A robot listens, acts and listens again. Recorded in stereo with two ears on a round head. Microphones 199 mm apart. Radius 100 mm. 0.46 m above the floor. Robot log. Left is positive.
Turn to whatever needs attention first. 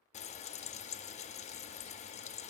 cmd idle
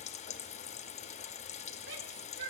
note: The shout: about 60° right or 120° right.
cmd yaw -60
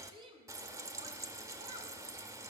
note: So it is at 25° right.
cmd yaw -25
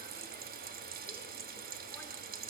cmd idle
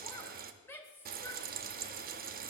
note: The shout is now 15° left.
cmd yaw +15
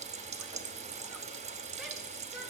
cmd idle
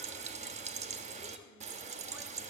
cmd idle
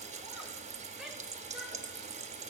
end: I heard a shout from this way, but can't make it out now.